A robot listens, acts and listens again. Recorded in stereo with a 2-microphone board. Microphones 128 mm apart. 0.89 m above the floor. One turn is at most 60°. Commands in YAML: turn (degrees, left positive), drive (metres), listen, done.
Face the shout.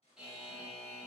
listen: true
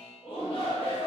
turn: 45
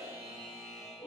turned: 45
turn: 60
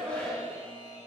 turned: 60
turn: 10
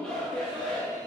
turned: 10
done: "Facing the shout."